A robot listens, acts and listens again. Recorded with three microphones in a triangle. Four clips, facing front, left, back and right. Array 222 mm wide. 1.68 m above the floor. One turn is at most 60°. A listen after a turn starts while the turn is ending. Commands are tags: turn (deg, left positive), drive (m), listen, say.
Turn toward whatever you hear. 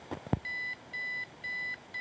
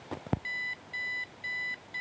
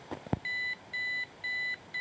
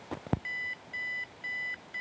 <turn deg="-60"/>
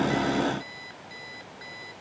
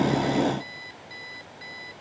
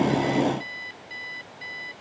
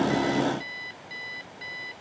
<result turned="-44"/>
<turn deg="-60"/>
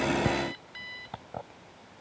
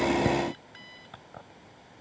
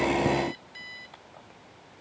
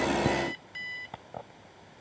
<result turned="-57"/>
<turn deg="-25"/>
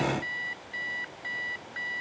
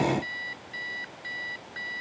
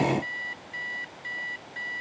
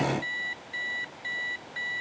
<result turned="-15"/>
<turn deg="-10"/>
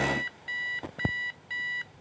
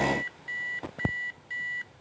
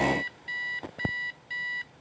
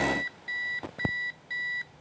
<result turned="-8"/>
<say>Facing the alarm clock.</say>